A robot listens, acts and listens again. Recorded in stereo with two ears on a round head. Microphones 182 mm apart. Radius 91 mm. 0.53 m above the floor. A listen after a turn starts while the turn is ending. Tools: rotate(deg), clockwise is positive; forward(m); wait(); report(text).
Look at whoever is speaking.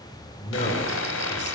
rotate(-35)
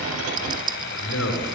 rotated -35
rotate(-105)
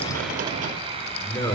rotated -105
rotate(-15)
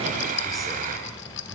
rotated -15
wait()
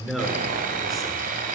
report("Found it: a man speaking, straight ahead, over 4 m away.")